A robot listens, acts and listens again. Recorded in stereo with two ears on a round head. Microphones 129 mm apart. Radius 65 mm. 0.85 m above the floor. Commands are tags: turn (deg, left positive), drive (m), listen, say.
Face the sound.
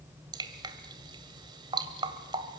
<turn deg="-30"/>
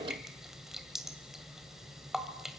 <say>Facing the dripping.</say>